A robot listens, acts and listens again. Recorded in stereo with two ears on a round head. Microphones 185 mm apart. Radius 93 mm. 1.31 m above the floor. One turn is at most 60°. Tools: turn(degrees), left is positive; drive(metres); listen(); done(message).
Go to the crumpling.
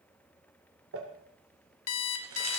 turn(degrees=-60)
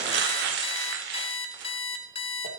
turn(degrees=-55)
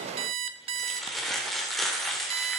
drive(metres=1.0)
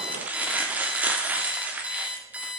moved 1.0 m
turn(degrees=-10)
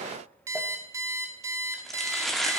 drive(metres=1.0)
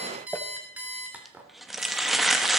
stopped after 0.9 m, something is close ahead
done("Arrived at the crumpling, straight ahead.")